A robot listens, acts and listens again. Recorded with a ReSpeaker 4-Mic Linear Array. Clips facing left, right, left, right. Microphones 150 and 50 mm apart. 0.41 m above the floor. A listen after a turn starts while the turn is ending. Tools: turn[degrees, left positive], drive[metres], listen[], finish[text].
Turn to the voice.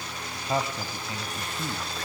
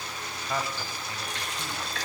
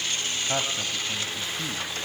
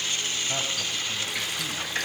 Thought: The man speaking: about 20° left or 160° left.
Action: turn[20]
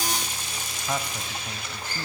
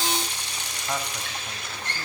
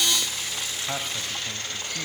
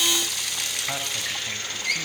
Action: listen[]
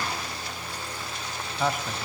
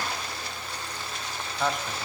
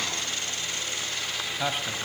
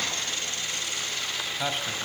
Action: finish[Found it: a man speaking, straight ahead.]